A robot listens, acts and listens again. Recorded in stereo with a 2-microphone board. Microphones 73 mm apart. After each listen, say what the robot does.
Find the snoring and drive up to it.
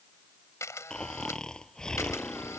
Turn 30° left.
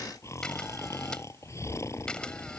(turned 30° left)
Turn 135° left.
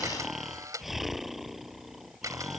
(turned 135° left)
Drive 1.0 m forward.
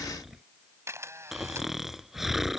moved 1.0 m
Drive 1.0 m forward.
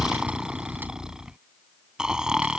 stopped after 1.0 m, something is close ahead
Turn 10° right.
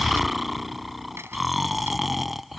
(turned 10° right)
Arrived at the snoring, straight ahead.